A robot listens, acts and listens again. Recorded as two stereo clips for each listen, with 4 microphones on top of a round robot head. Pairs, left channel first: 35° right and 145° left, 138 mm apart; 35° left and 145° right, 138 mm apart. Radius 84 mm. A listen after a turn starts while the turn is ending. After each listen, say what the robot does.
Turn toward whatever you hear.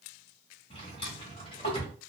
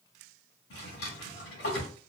Turn 20° left.
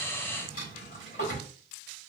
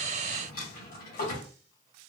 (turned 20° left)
Found it: a drawer, straight ahead, 1 to 2 m away.